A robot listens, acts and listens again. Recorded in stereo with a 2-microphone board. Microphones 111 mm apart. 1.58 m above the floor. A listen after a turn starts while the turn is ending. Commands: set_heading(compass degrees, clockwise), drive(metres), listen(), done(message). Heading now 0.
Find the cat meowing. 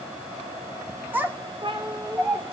set_heading(55)
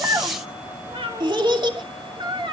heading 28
set_heading(83)
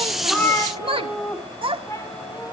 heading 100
set_heading(70)
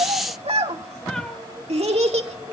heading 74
listen()
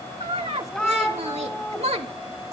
set_heading(64)
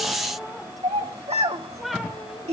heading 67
done("Found it: a cat meowing, straight ahead.")